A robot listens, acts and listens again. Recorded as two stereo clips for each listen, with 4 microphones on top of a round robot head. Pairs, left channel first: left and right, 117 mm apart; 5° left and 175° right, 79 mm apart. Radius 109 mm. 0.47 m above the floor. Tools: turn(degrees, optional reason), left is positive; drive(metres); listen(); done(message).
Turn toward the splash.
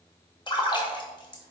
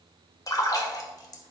turn(degrees=45, reason="The splash: 45° left.")
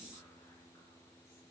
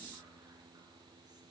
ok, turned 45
done("Facing where the splash came from. I can't hear it now.")